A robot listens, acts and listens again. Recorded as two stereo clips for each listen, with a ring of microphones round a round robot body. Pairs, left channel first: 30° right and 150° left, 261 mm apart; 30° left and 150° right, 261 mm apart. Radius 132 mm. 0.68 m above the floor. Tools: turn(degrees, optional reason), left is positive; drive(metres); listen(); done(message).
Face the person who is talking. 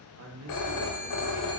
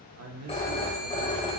turn(degrees=180, reason="The man speaking: straight behind.")
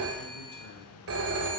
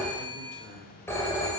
listen()
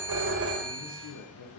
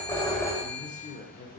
turn(degrees=-30, reason="The man speaking is now 30° right.")
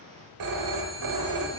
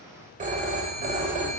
listen()
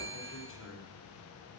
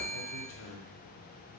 done("Found it: a man speaking, straight ahead.")